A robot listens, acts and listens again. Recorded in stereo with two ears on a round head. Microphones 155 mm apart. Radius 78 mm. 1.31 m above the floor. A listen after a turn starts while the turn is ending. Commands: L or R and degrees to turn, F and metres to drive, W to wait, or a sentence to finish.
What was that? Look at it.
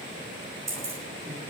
R15
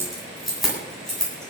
L30
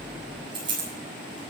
R30
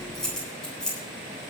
Found it: keys jangling, straight ahead, over 4 m away.